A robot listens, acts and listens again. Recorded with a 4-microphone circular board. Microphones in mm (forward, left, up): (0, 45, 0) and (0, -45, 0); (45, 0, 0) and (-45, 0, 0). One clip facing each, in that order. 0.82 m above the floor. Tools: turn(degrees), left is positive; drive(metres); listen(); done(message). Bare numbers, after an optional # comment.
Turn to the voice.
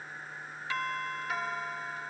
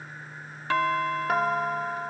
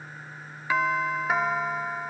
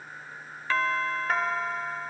listen()
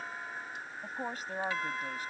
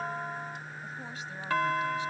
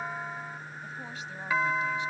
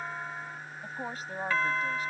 # The woman speaking: 135° left.
turn(135)
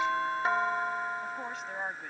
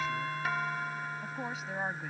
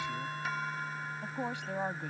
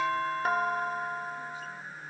done("Found it: a woman speaking, straight ahead.")